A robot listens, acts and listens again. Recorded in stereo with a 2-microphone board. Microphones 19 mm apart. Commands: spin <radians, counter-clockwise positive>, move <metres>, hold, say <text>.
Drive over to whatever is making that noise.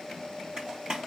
spin -0.87
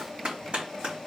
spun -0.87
spin -1.40
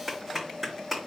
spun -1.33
move 1.0
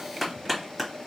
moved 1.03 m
move 1.0
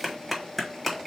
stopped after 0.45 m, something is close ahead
say I am next to the clap.